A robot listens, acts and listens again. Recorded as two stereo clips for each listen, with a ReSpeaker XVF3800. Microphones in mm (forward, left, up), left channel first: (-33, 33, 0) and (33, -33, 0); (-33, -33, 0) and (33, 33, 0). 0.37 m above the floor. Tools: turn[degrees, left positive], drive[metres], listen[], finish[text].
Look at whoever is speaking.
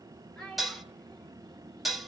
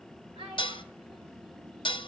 Thought: The child speaking: 50° left.
Action: turn[50]
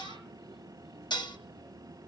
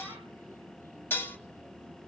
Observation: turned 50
Action: listen[]
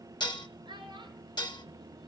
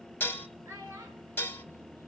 Thought: The child speaking is now 10° right.
Action: turn[-10]
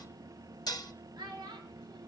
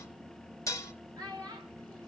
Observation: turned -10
Action: finish[Found it: a child speaking, straight ahead.]